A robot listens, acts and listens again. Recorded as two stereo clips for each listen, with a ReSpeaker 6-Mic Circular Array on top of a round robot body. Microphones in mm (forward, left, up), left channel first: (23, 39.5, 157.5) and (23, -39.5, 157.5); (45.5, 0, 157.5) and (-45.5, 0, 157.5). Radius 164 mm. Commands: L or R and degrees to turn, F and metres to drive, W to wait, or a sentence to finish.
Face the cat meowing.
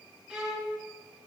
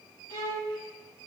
W
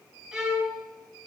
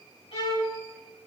W
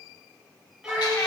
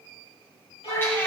L65
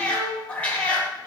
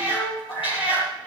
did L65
L20
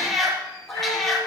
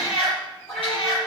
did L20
Found it: a cat meowing, straight ahead, over 4 m away.